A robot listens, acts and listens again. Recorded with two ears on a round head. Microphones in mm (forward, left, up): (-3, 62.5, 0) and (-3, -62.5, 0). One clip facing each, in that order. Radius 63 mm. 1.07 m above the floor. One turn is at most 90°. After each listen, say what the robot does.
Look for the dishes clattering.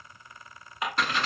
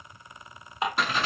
Turn 25° right.
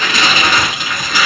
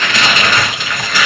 Keep listening.
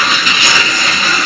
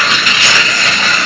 Keep listening.
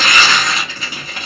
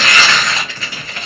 I heard dishes clattering, but can't make it out now. It was about straight ahead or 130° right.